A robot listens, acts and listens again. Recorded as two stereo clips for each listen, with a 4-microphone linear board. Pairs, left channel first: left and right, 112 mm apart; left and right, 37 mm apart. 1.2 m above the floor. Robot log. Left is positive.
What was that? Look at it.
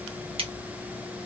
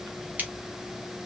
note: The scissors: about 55° right or 125° right.
cmd yaw -55
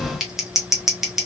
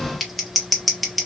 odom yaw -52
end: Found it: scissors, straight ahead, 1 to 2 m away.